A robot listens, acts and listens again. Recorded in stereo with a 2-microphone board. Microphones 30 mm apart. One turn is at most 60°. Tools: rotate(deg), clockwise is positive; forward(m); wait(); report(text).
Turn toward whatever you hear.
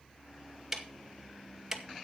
rotate(30)
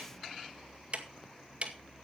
rotate(60)
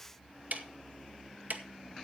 rotate(60)
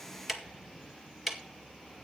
report("Found it: ticking, straight ahead.")